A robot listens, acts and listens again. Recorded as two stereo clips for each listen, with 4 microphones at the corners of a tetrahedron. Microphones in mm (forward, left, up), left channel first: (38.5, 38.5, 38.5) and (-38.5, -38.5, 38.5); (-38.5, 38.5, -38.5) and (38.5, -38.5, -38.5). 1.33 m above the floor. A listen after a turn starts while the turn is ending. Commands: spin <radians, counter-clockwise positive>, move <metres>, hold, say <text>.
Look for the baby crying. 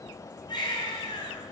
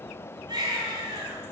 say Found it: a baby crying, straight ahead, 2 to 4 m away.